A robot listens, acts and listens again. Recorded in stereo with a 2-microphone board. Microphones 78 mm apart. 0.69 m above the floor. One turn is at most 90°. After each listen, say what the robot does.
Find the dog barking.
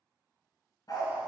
Turn 55° left.
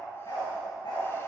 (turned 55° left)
Turn 70° left.
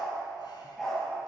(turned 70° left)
Found it: a dog barking, straight ahead, over 4 m away.